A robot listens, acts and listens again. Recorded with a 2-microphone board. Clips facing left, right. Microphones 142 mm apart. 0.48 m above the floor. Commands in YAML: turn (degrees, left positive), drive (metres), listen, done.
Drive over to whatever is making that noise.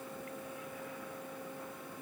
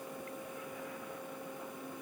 listen: true
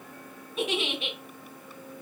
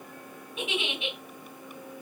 turn: 35
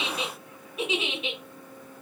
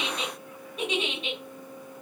drive: 1.0
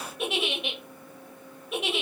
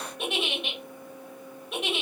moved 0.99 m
drive: 1.0
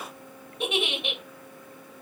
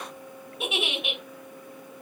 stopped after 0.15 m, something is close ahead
done: "I am next to the giggle."